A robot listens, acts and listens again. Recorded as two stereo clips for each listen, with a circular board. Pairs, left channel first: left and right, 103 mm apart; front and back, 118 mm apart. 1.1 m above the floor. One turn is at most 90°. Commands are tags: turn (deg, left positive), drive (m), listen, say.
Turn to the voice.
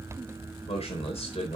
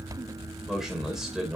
<turn deg="90"/>
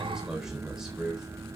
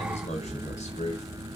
<say>Facing the man speaking.</say>